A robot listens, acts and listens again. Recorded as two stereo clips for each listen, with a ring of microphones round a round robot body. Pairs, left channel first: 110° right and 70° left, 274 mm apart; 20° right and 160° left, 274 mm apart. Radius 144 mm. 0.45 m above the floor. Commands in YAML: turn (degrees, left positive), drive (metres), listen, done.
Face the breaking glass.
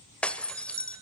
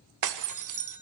turn: 160
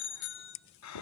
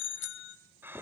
done: "Facing where the breaking glass came from. I can't hear it now."